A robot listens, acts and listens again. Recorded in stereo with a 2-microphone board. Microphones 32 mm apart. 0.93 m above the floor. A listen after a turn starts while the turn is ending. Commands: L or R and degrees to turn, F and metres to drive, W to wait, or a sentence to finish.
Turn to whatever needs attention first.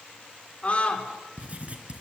L35
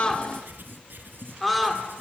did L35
Facing the scream.